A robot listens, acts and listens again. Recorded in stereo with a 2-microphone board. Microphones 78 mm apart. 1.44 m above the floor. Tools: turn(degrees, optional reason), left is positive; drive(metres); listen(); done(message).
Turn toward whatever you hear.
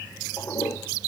turn(degrees=45, reason="The toilet flushing: about 45° left or 135° left.")
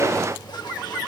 listen()
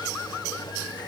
listen()
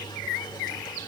done("I heard a toilet flushing, but can't make it out now. It was about straight ahead or 90° left.")